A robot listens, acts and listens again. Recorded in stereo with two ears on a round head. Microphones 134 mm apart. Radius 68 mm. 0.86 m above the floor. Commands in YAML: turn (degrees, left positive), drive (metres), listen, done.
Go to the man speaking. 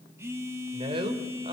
turn: -40
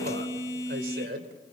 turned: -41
turn: -100
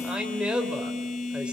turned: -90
drive: 1.0
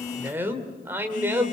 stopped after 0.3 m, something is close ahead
turn: -15
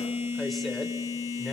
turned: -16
listen: true
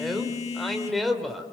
done: "Something is in my way. I am facing the man speaking but have not reached it."